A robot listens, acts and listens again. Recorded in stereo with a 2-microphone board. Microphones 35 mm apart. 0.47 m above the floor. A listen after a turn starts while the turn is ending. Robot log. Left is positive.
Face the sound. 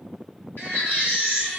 cmd yaw +90
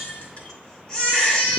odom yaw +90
note: So it is at 15° left.
cmd yaw +15
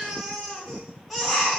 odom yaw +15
end: Facing the baby crying, 2 to 4 m away.